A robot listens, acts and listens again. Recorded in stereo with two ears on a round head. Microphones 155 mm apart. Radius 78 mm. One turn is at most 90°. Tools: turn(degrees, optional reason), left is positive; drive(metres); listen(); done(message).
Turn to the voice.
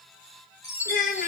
turn(degrees=50, reason="The child speaking: about 50° left or 130° left.")
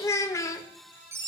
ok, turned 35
turn(degrees=20, reason="So it is at 20° left.")
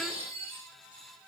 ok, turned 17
listen()
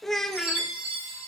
done("Facing the child speaking.")